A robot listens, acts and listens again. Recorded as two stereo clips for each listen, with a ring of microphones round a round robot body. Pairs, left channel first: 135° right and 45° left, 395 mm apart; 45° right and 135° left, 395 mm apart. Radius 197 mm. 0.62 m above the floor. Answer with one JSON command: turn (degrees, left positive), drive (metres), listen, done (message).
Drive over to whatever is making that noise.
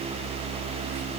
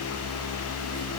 {"listen": true}
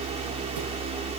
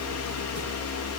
{"listen": true}
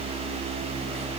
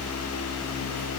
{"done": "I can't make out anything to turn to."}